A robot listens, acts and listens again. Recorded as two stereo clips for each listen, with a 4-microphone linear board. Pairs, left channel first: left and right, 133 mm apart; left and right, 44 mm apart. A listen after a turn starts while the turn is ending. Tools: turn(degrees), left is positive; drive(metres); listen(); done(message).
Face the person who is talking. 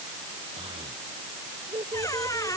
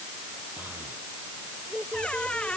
turn(degrees=-40)
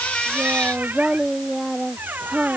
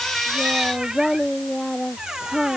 done("Facing the child speaking.")